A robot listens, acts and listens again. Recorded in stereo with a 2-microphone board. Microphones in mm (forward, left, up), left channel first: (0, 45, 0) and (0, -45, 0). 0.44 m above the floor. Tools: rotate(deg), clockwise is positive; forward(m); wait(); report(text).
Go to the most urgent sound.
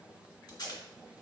wait()
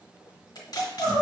rotate(65)
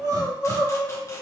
rotate(50)
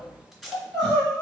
forward(1.0)
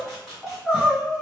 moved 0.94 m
forward(1.0)
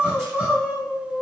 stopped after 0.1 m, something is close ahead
report("Arrived at the crying, straight ahead.")